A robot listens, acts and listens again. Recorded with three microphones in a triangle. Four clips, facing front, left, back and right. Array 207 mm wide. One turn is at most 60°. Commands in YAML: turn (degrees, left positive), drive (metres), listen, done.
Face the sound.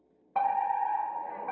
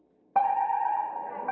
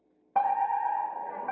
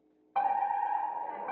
turn: 60
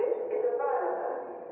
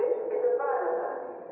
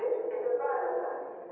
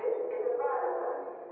turn: 45
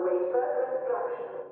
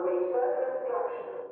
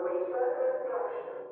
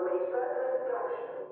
turn: 15
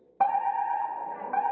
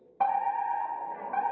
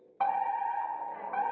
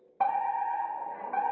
done: "Facing the fire alarm, under 1 m away."